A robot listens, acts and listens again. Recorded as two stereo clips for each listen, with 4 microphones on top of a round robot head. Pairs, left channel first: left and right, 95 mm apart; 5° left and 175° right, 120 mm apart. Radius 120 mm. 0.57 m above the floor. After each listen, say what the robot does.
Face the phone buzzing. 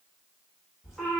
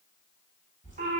Keep listening.
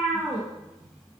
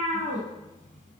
Keep listening.
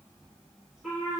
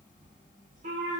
I can't make out a phone buzzing to turn to.